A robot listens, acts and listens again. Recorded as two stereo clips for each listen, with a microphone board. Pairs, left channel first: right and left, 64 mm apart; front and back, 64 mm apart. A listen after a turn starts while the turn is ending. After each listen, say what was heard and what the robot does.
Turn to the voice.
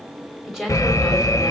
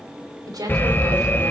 The woman speaking: 175° left. Turn 175° left.
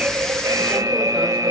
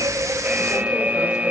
Keep listening.
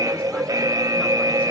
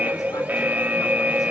Keep listening.
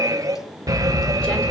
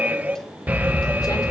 I heard a woman speaking from this way, but can't make it out now.